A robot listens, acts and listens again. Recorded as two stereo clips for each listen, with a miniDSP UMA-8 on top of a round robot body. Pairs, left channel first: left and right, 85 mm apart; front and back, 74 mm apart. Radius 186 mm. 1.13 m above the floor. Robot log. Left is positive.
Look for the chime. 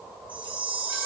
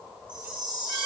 note: The chime: 165° right.
cmd yaw -165
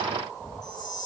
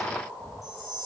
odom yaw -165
note: The chime is now 45° left.
cmd yaw +45
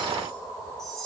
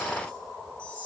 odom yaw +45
end: Facing the chime.